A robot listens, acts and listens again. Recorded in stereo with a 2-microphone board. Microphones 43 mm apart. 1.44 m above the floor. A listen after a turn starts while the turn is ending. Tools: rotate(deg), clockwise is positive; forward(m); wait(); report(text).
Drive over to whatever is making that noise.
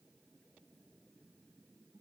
wait()
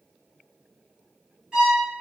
rotate(15)
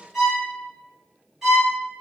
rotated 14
forward(1.0)
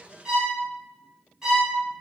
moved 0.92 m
rotate(15)
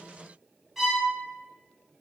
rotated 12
forward(1.0)
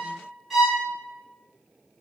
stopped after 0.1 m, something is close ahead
report("Arrived at the violin, straight ahead.")